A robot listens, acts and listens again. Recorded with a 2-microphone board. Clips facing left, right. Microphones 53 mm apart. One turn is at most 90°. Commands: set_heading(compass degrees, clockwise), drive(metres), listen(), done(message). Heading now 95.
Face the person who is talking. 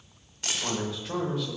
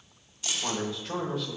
set_heading(65)
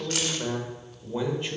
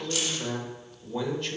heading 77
set_heading(347)
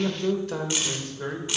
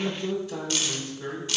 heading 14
set_heading(284)
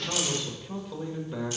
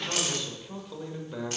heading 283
done("Facing the man speaking, 1 to 2 m away.")